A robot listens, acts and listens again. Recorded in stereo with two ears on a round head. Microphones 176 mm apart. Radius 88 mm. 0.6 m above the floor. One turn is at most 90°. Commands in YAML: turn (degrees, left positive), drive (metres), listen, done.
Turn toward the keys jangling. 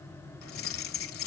turn: 90
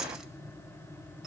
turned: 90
done: "Found it: keys jangling, straight ahead."